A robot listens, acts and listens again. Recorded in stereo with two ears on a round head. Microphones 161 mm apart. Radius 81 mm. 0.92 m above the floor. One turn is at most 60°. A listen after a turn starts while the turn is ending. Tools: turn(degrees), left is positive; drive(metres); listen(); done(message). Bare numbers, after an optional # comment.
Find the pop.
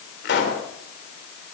# The pop: about 60° left or 120° left.
turn(60)
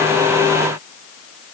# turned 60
listen()
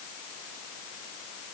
done("I heard a pop, but can't make it out now. It was about straight ahead or 60° left.")